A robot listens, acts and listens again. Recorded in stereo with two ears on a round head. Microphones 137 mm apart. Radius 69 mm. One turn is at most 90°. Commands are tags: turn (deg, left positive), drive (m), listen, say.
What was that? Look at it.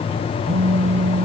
<turn deg="-45"/>
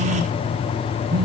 <turn deg="-90"/>
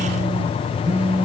<turn deg="-10"/>
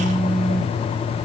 <say>Facing the phone buzzing, under 1 m away.</say>